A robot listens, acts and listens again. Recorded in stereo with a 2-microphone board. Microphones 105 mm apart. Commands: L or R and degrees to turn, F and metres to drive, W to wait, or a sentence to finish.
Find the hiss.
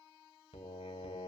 W
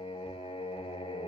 W
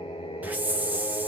R15
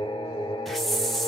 Found it: a hiss, straight ahead, under 1 m away.